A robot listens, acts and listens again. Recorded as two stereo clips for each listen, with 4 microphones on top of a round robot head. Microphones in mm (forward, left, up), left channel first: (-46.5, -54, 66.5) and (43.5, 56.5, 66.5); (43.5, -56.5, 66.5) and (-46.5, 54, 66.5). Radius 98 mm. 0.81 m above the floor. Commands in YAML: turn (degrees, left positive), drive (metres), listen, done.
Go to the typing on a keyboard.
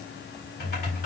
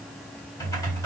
turn: -120
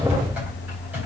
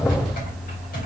turn: -30
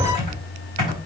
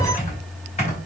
drive: 1.0
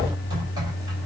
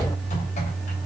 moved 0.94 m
turn: -15
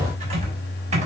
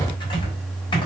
drive: 1.0
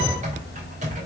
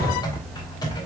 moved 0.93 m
turn: 10
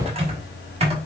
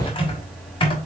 drive: 1.0
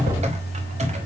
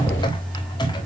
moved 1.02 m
turn: 10
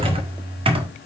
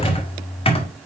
drive: 1.0
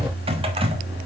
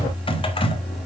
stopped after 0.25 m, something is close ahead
done: "I am next to the typing on a keyboard."